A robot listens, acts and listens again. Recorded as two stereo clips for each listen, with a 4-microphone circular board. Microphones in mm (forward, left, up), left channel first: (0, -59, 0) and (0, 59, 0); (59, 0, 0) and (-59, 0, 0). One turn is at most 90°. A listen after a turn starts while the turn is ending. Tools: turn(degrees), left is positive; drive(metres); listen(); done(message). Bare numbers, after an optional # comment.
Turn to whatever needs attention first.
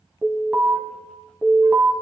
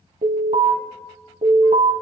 # The alarm: 170° left.
turn(90)
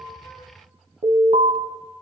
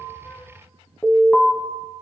# The alarm is now 80° left.
turn(80)
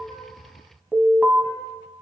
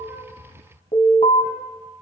done("Found it: an alarm, straight ahead, 1 to 2 m away.")